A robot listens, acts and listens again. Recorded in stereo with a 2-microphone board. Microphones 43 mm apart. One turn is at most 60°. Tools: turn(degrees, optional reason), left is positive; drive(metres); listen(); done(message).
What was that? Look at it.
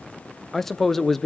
turn(degrees=30)
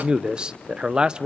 turn(degrees=-20, reason="So it is at 20° right.")
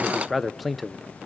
done("Facing the man speaking.")